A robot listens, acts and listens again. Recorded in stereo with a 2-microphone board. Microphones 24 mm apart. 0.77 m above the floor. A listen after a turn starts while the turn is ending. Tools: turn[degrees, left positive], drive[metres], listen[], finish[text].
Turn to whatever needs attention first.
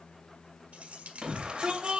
Thought: The shout: about 40° right or 140° right.
Action: turn[-40]
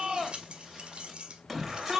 Action: finish[Found it: a shout, straight ahead.]